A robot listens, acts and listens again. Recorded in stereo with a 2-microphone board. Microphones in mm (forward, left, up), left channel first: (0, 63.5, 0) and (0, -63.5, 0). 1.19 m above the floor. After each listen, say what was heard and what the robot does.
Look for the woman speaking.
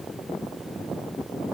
Keep listening.
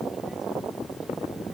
Keep listening.
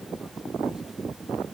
I can't make out a woman speaking to turn to.